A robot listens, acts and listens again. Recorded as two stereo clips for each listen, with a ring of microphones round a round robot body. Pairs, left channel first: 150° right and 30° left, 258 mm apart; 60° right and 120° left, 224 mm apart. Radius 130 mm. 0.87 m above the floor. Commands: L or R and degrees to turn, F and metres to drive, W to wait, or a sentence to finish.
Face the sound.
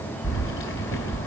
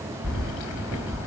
R105
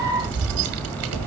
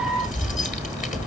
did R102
Facing the keys jangling, 2 to 4 m away.